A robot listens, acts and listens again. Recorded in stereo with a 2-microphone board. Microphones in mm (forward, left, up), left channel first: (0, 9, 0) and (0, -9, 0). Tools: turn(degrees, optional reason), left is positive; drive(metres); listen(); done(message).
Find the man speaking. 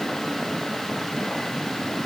listen()
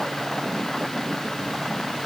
listen()
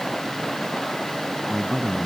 turn(degrees=35, reason="The man speaking: about 35° left or 145° left.")
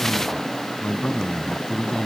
turn(degrees=110, reason="So it is at 110° left.")
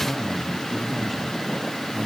turn(degrees=15, reason="The man speaking is now 15° left.")
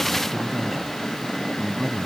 done("Facing the man speaking.")